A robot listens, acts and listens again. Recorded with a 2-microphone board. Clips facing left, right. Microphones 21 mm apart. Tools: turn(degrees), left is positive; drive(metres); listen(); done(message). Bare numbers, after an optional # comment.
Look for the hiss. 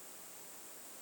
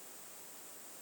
listen()
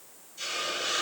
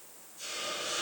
# The hiss: about 55° left or 125° left.
turn(55)
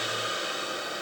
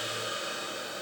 # So it is at 70° left.
turn(70)
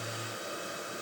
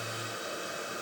# The hiss is now 10° right.
turn(-10)
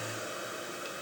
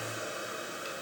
done("Facing the hiss, 1 to 2 m away.")